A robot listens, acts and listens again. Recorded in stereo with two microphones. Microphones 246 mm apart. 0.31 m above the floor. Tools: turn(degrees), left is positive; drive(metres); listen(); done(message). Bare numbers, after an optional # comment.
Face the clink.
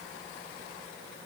listen()
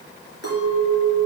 turn(-90)
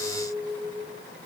done("Found it: a clink, straight ahead, 2 to 4 m away.")